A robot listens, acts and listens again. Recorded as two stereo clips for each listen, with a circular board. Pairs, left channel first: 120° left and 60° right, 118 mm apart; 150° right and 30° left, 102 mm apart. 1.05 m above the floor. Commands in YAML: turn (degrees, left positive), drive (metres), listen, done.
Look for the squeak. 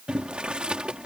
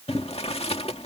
listen: true
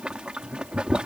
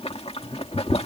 listen: true
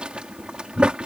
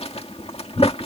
done: "I can't make out a squeak, only boiling."